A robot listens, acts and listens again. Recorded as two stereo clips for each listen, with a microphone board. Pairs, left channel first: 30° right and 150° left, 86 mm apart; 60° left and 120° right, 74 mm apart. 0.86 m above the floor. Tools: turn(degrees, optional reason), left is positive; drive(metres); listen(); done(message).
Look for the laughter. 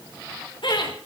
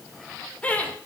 turn(degrees=-10, reason="The laughter: 10° right.")
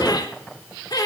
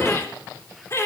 turn(degrees=10, reason="The laughter is now 10° left.")
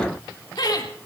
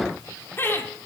done("Found it: laughter, straight ahead, 2 to 4 m away.")